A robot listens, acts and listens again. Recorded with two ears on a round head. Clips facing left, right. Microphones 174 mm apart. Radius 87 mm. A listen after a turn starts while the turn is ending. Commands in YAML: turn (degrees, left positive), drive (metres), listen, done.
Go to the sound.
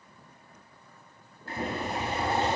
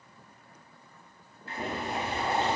turn: 40
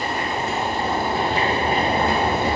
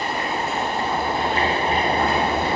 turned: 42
turn: 100
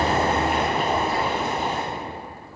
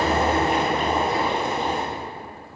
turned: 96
drive: 1.0
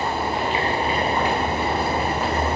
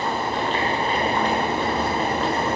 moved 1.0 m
turn: 10
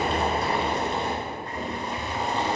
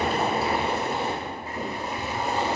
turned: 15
drive: 1.0
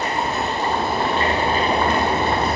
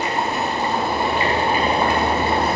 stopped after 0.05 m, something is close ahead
turn: -10
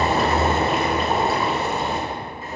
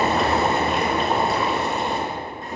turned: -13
done: "I am next to the boiling."